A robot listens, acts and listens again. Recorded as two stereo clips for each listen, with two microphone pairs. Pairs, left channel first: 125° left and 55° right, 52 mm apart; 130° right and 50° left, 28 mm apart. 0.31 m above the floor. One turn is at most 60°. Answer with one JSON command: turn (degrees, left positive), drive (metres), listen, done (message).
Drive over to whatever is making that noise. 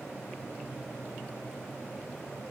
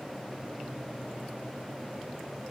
{"listen": true}
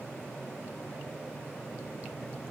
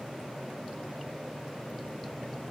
{"listen": true}
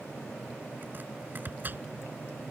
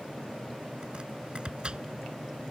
{"drive": 1.0}
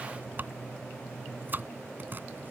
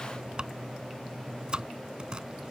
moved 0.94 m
{"drive": 1.0}
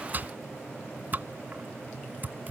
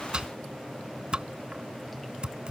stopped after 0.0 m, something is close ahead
{"done": "Something is in my way. I am facing the chopping but have not reached it."}